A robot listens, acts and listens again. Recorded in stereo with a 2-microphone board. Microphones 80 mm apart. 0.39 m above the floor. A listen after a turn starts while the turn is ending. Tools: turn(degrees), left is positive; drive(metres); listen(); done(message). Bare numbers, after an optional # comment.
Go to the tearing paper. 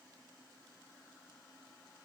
listen()
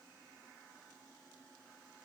listen()
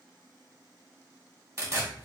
# The tearing paper: about 40° right or 140° right.
turn(-40)
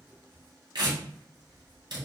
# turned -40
# So it is at 95° right.
turn(-95)
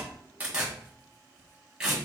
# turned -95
# The tearing paper is now 10° right.
turn(-10)
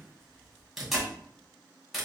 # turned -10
drive(1.0)
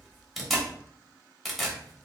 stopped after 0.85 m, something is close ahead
done("Arrived at the tearing paper, straight ahead.")